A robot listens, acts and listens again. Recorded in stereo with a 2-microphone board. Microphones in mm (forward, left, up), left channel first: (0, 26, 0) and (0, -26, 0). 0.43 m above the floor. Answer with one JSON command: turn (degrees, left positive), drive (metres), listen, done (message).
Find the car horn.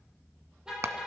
{"turn": -15}
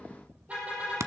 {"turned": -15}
{"turn": -150}
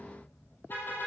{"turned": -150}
{"turn": 45}
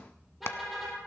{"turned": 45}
{"done": "Found it: a car horn, straight ahead, over 4 m away."}